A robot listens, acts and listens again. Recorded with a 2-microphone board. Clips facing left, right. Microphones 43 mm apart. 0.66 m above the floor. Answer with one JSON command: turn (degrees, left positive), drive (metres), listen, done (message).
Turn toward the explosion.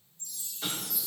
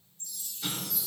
{"turn": 45}
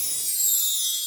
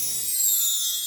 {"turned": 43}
{"listen": true}
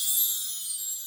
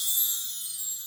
{"done": "I heard an explosion, but can't make it out now. It was about 5° left or 90° left."}